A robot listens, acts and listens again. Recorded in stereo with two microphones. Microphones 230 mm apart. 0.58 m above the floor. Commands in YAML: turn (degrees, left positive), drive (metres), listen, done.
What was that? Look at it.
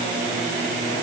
listen: true
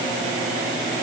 listen: true
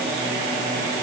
done: "I can't make out anything to turn to."